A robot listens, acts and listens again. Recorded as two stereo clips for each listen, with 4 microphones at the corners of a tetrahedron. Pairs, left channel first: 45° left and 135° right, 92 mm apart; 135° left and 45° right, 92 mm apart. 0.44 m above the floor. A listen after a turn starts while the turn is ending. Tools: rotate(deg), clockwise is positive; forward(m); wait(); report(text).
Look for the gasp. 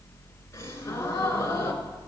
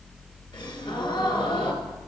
rotate(-100)
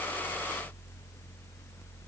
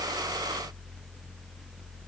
report("Facing where the gasp came from. I can't hear it now.")